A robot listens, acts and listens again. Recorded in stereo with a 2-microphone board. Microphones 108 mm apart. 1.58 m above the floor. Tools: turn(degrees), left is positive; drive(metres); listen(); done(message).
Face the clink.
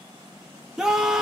listen()
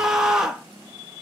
listen()
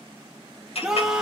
turn(degrees=70)
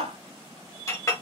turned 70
turn(degrees=30)
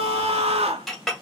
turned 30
done("Facing the clink, 1 to 2 m away.")